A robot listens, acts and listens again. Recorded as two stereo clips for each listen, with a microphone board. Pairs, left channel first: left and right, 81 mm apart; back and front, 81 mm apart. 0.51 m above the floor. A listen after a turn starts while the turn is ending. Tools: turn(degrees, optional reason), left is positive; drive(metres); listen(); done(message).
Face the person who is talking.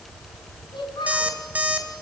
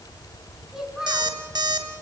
turn(degrees=85, reason="The child speaking: 85° left.")
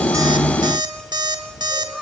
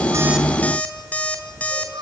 done("Facing the child speaking, over 4 m away.")